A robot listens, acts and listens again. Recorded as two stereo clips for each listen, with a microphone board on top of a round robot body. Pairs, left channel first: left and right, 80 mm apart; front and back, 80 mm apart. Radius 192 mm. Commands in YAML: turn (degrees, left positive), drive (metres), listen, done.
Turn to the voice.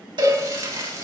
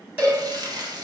listen: true
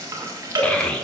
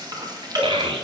turn: 170
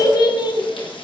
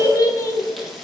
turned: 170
turn: 55
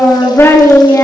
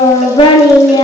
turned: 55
turn: 30
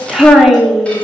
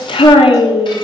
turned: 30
done: "Found it: a child speaking, straight ahead, 1 to 2 m away."